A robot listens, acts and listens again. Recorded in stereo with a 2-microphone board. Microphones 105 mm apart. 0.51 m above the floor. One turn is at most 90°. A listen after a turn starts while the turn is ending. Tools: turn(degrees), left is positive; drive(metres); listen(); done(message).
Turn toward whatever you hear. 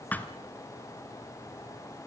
turn(degrees=15)
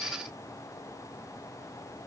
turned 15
listen()
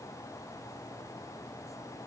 done("I heard a thud, but can't make it out now. It was about straight ahead or 150° left.")